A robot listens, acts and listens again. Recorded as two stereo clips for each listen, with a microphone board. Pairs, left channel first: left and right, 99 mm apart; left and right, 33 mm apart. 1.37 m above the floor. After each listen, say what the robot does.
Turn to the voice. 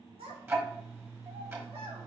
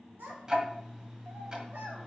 Turn 90° right.
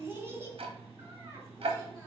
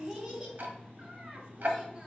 Turn 25° right.
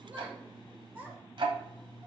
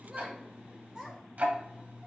Turn 20° right.
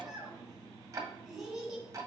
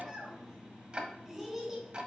Found it: a child speaking, straight ahead.